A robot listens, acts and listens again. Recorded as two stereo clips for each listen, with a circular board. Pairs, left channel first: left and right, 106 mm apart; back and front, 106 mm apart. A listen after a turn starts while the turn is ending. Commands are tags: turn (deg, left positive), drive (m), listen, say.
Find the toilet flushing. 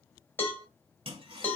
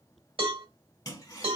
<turn deg="-125"/>
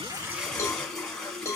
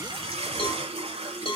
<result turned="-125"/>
<say>Facing the toilet flushing.</say>